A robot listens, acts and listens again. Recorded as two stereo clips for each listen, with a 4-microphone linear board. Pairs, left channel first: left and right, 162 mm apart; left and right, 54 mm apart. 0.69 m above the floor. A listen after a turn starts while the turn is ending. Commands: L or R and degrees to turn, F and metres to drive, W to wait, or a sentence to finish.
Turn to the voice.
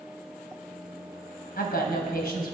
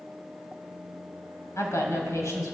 L70
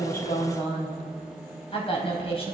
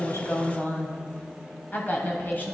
L35
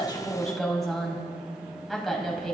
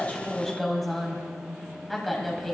Facing the woman speaking, 2 to 4 m away.